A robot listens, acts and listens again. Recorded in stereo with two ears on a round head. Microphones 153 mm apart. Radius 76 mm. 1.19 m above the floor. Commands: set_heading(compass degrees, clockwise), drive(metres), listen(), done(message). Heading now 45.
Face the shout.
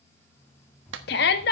set_heading(340)
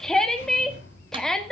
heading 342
done("Facing the shout, 1 to 2 m away.")